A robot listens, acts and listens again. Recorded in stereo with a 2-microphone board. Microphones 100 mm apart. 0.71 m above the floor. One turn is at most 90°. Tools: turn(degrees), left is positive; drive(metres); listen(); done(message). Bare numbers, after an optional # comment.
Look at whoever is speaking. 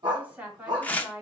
turn(-30)
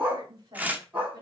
# So it is at 135° right.
turn(-90)
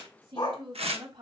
# The woman speaking is now 65° right.
turn(-65)
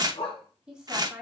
# The woman speaking is now 10° right.
turn(-10)
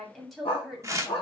done("Facing the woman speaking, 1 to 2 m away.")